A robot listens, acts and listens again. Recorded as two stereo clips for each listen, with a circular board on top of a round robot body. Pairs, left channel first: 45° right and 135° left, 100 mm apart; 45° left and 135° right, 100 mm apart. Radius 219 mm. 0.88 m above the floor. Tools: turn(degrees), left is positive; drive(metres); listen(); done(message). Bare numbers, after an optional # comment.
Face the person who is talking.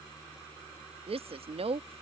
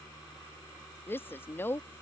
# The woman speaking: 115° left.
turn(115)
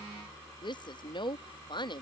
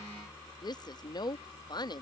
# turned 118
done("Found it: a woman speaking, straight ahead.")